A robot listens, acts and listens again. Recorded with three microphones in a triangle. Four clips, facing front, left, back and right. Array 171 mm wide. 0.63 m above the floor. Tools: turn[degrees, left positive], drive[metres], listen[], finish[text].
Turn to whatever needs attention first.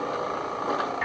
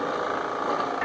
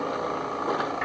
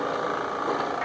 Action: listen[]
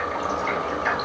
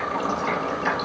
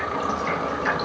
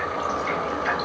Action: listen[]
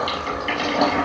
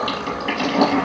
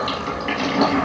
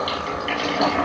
Action: finish[I can't make out anything urgent to turn to.]